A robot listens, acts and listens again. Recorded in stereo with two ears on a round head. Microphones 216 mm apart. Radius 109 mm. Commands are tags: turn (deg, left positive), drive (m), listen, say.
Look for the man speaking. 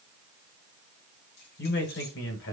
<turn deg="55"/>
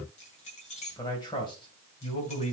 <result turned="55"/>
<turn deg="25"/>
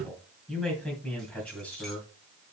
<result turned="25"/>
<say>Found it: a man speaking, straight ahead, 2 to 4 m away.</say>